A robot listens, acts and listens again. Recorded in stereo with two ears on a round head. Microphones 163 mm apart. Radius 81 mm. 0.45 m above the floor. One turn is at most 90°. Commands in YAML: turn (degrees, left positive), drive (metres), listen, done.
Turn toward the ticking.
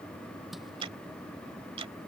turn: -30
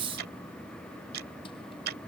turn: -90
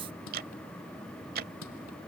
turn: -60
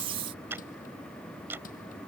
turn: -15
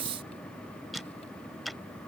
done: "Found it: ticking, straight ahead."